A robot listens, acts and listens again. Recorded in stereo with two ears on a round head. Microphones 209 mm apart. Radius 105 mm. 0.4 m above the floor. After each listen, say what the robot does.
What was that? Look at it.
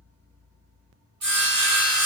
Turn 60° right.
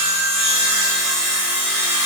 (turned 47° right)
Turn 60° right.
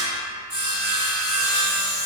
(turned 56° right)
Facing the sawing, 1 to 2 m away.